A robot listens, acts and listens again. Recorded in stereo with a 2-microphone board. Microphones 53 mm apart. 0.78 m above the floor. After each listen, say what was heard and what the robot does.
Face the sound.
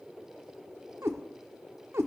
The cat meowing: about 65° right or 115° right. Turn 65° right.
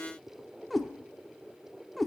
Found it: a cat meowing, straight ahead, 1 to 2 m away.